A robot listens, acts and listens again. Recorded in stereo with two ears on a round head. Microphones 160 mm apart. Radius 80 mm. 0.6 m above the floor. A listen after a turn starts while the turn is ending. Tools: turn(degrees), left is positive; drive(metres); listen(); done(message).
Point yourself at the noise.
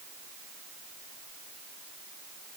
listen()
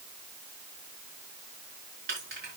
turn(degrees=-60)
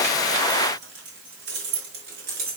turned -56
turn(degrees=-60)
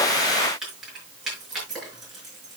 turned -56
done("Facing the keys jangling.")